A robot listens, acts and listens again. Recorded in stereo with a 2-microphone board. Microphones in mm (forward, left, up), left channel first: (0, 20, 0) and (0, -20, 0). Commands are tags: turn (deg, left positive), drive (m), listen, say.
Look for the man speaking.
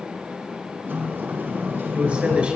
<turn deg="-30"/>
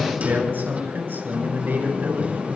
<turn deg="-120"/>
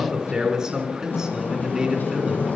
<turn deg="-20"/>
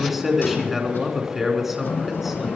<say>Found it: a man speaking, straight ahead, 2 to 4 m away.</say>